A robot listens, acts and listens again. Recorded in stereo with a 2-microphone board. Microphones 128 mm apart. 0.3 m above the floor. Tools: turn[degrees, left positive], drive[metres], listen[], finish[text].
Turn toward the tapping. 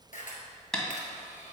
Action: turn[30]
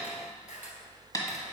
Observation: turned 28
Thought: So it is at 145° left.
Action: turn[145]
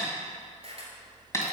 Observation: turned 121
Thought: The tapping is now 25° left.
Action: turn[25]
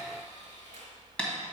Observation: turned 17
Thought: The tapping is now 10° left.
Action: turn[10]
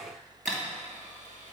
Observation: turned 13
Action: finish[Facing the tapping.]